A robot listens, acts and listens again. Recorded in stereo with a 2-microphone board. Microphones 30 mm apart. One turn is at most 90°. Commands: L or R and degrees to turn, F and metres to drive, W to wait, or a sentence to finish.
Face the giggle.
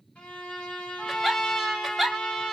R30
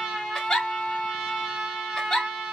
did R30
L25
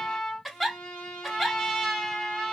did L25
Found it: a giggle, straight ahead, under 1 m away.